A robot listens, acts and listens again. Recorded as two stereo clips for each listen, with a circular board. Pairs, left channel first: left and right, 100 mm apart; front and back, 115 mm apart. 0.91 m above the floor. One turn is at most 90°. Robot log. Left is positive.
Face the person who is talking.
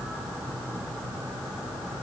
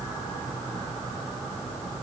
cmd idle
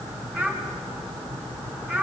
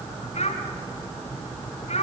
note: The child speaking: 10° left.
cmd yaw +10
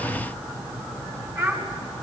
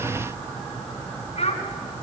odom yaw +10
end: Found it: a child speaking, straight ahead, 2 to 4 m away.